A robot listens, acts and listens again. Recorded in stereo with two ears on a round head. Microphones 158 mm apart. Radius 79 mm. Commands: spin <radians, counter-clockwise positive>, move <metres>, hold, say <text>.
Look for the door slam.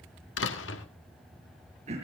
spin 1.57
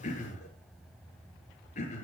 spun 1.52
say Facing where the door slam came from. I can't hear it now.